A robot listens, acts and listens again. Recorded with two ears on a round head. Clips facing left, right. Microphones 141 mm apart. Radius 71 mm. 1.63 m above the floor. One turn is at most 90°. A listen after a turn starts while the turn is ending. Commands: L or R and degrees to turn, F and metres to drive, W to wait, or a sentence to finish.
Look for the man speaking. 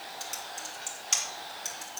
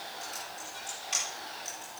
W
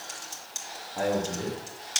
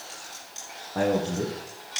R90
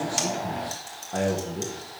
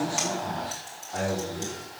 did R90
L50
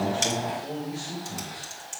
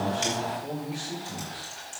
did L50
Facing the man speaking.